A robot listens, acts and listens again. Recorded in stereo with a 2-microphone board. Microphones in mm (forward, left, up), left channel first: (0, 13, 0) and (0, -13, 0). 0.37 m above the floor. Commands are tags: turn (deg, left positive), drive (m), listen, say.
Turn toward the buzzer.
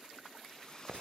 <listen/>
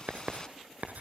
<listen/>
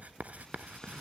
<say>I can't make out a buzzer to turn to.</say>